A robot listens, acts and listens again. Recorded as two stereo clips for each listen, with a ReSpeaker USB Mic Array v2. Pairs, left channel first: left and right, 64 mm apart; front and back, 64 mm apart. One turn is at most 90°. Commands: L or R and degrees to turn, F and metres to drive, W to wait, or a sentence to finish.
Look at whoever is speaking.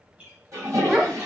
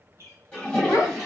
R15
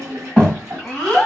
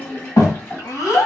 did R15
Facing the child speaking, 1 to 2 m away.